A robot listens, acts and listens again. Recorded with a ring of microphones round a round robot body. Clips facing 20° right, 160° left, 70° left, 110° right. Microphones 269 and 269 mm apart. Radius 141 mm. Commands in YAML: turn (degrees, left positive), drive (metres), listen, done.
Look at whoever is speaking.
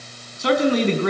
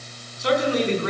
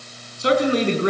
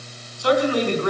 done: "Facing the man speaking, over 4 m away."